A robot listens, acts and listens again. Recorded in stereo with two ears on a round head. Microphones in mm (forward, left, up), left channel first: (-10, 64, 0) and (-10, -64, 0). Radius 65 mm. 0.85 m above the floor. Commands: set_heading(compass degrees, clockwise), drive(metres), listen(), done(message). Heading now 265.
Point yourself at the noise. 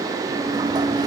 set_heading(290)
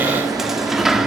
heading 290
done("Facing the sliding door.")